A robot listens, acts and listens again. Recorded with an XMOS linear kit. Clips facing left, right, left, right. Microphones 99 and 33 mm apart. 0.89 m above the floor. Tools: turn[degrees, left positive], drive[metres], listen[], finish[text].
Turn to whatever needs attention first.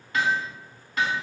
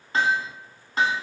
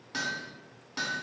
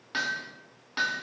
Action: listen[]
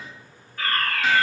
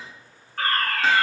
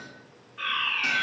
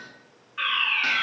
Thought: The fire alarm: about 55° right or 125° right.
Action: turn[-55]
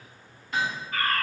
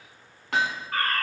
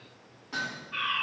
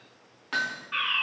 Thought: So it is at 65° right.
Action: turn[-65]
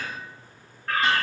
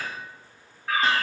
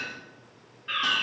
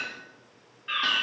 Action: finish[Facing the fire alarm, 2 to 4 m away.]